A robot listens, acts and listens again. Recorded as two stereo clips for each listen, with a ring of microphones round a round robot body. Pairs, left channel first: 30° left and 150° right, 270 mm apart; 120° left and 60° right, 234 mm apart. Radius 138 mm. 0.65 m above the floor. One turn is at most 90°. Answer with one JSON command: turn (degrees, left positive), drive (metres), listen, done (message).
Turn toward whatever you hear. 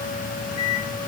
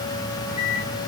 {"turn": 60}
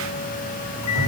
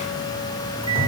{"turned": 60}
{"done": "Facing the microwave."}